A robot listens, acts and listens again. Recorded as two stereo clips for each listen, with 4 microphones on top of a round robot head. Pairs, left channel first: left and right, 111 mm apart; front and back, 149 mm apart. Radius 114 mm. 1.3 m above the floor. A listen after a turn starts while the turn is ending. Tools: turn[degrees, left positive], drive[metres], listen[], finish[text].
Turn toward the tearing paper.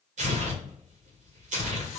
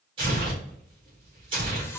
Thought: The tearing paper: 115° right.
Action: turn[-115]
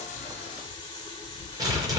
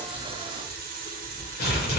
Thought: The tearing paper is now 30° right.
Action: turn[-30]
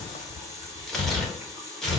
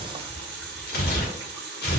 Action: finish[Facing the tearing paper, 1 to 2 m away.]